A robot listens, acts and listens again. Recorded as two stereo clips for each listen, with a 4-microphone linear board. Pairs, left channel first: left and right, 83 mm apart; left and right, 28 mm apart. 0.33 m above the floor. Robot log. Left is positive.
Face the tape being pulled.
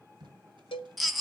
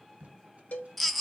note: The tape being pulled: about 60° right or 120° right.
cmd yaw -60
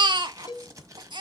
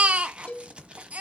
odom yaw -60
note: So it is at 45° right.
cmd yaw -45
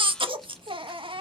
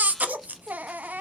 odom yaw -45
cmd idle
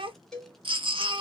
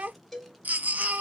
cmd idle
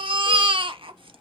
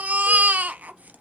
end: Facing where the tape being pulled came from. I can't hear it now.